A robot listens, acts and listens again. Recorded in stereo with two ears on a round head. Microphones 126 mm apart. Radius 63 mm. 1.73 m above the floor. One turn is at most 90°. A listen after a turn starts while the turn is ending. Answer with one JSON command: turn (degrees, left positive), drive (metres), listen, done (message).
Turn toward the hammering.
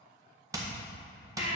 {"turn": -25}
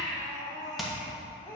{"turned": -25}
{"done": "Found it: hammering, straight ahead, 1 to 2 m away."}